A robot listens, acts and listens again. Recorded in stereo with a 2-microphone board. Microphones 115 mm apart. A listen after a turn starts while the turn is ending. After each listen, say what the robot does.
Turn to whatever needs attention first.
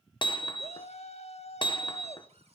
Turn 70° left.
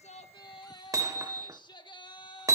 Turn 40° left.
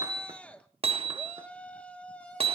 Turn 10° left.
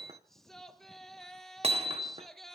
Facing the shout, 1 to 2 m away.